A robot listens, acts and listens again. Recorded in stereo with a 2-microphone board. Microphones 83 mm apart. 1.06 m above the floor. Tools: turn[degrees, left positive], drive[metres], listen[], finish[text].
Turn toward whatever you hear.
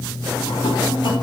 Action: listen[]
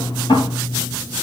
Action: turn[90]
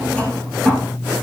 Thought: So it is at 15° left.
Action: turn[15]
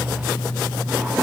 Action: listen[]
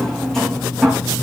Action: finish[Found it: a drawer, straight ahead, over 4 m away.]